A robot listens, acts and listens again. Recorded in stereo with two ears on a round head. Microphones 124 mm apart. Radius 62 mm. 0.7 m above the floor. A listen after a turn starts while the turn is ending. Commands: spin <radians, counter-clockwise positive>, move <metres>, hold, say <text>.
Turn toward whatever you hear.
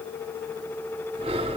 spin -0.70
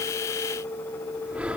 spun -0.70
spin -0.17
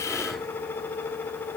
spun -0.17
hold
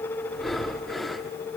say Facing the breathing, 1 to 2 m away.